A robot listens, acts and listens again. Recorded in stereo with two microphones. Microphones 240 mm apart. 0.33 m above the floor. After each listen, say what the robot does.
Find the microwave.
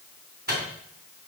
Turn 40° right.
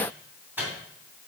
Turn 10° right.
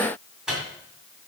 Facing the microwave.